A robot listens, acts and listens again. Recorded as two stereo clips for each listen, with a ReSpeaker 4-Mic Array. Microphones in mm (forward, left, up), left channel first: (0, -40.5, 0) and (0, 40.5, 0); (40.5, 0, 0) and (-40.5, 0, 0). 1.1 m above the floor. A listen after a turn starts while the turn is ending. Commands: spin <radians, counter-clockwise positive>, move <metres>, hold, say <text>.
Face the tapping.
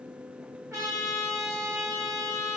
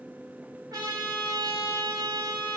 hold
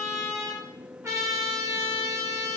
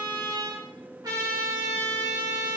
hold
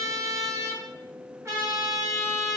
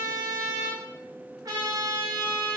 say I can't make out tapping to turn to.